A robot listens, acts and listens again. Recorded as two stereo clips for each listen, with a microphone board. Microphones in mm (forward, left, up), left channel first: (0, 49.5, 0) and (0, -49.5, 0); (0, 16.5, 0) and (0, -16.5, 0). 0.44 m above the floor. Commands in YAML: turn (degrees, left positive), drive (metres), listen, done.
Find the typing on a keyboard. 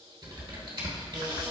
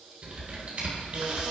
turn: -50
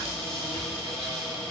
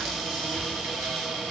listen: true
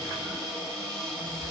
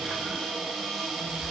listen: true
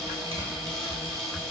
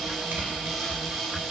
turn: -80
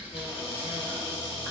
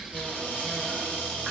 done: "Found it: typing on a keyboard, straight ahead, 1 to 2 m away."